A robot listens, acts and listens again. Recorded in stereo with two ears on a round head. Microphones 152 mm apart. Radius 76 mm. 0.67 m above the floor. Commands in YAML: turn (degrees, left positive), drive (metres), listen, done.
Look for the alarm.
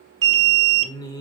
turn: -70
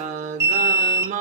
turn: -20
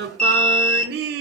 done: "Found it: an alarm, straight ahead."